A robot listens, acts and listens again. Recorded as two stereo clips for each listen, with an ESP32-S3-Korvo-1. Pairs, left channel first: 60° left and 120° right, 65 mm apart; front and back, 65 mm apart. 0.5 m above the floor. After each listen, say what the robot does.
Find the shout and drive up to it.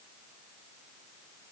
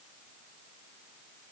Keep listening.
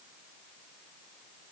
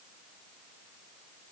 Keep listening.
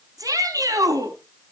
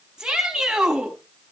Turn 100° right.
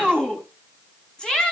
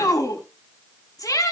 Turn 20° right.
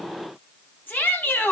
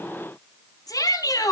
Drive 1.0 m forward.
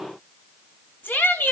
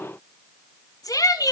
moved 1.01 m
Drive 1.0 m forward.
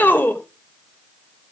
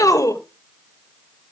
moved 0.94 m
Drive 1.0 m forward.
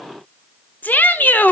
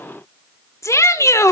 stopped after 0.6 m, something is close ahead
Arrived at the shout, straight ahead.